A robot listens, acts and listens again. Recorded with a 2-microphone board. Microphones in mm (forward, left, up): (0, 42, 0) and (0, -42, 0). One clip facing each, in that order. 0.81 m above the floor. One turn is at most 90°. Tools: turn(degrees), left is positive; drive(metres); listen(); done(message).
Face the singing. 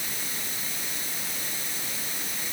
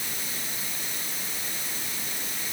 listen()
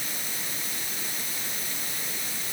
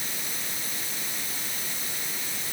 listen()
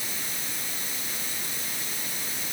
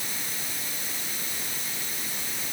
done("I can't make out singing to turn to.")